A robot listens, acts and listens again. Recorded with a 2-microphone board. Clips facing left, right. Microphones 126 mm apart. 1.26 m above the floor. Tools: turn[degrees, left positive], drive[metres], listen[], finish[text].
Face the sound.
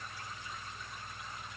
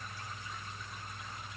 Action: listen[]
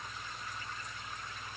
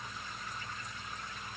Action: listen[]
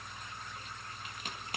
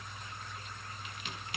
Thought: The crack: about 40° left or 140° left.
Action: turn[40]
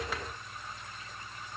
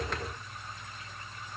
Action: listen[]
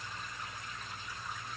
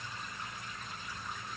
Action: finish[I heard a crack, but can't make it out now. It was about straight ahead or 100° left.]